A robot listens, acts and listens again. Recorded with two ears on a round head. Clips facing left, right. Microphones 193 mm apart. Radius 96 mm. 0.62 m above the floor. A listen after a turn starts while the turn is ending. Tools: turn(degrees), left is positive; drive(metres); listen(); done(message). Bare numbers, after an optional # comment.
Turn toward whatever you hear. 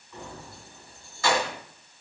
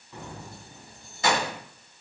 # The keys jangling: about 20° right or 160° right.
turn(-20)
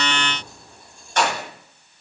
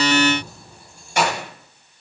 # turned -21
turn(-30)
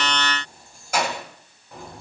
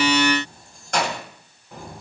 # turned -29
done("Facing the keys jangling, 2 to 4 m away.")